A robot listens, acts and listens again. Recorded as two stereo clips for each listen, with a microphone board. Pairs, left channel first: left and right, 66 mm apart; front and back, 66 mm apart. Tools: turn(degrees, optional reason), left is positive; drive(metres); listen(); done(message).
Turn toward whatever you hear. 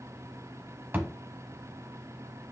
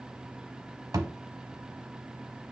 turn(degrees=-150, reason="The thud: 150° right.")
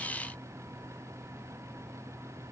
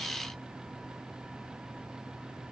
done("Facing where the thud came from. I can't hear it now.")